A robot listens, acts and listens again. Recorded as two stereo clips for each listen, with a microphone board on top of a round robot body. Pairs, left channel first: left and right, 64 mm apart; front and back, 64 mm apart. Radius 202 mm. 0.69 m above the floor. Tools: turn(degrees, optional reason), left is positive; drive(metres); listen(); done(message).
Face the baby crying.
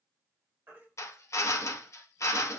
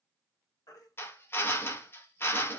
turn(degrees=-30, reason="The baby crying: 30° right.")
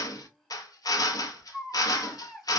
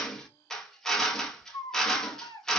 done("Facing the baby crying, under 1 m away.")